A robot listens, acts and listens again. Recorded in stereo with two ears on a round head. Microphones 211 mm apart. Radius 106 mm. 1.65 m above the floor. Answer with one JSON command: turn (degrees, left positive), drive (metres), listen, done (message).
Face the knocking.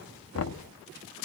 {"turn": 60}
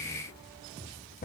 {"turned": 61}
{"turn": 40}
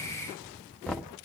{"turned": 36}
{"done": "Facing the knocking."}